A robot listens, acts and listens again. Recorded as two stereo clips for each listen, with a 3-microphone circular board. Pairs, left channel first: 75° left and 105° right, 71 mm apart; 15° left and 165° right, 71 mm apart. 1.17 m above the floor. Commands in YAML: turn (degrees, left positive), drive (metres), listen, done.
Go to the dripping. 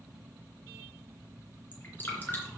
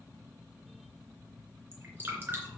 turn: 135
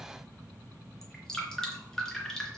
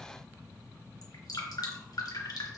turn: -10
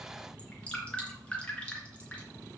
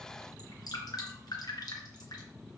drive: 1.0
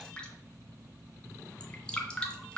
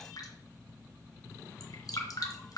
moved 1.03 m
drive: 1.0
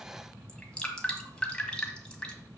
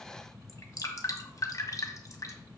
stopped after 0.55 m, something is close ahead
done: "I am next to the dripping."